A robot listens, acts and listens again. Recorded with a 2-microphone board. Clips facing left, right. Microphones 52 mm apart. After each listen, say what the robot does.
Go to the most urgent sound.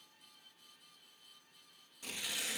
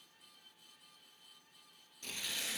Keep listening.
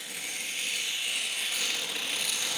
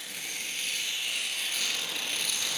Keep listening.
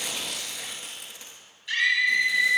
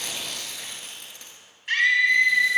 Turn 50° right.
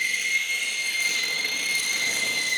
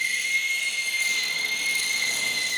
Drive 1.0 m forward.
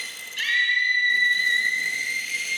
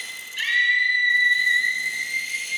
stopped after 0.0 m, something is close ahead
Blocked. The scream is further on, straight ahead.